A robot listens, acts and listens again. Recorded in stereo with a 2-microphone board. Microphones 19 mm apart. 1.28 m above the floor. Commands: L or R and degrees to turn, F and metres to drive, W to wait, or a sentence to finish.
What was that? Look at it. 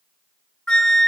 L50
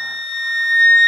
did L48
L85
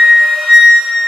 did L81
Facing the flute, 1 to 2 m away.